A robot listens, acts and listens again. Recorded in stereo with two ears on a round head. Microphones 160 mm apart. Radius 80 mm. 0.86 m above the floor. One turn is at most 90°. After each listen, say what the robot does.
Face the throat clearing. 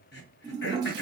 Turn 65° left.
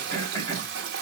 Turn 20° left.
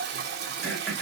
Found it: throat clearing, straight ahead.